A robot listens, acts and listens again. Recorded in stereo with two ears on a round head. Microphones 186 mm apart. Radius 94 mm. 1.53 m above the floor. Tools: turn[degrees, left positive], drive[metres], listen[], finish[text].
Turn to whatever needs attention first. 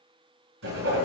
Action: listen[]
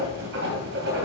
Action: listen[]
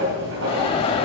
Thought: The alarm: about 25° left or 155° left.
Action: turn[25]
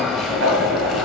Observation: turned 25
Action: finish[Found it: an alarm, straight ahead.]